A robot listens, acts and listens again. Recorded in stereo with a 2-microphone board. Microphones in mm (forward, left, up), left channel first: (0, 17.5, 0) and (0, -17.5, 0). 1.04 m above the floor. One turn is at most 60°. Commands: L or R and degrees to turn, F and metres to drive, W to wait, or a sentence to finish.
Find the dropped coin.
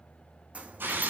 R35
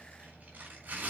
W
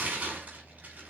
I heard a dropped coin, but can't make it out now. It was about straight ahead or 110° right.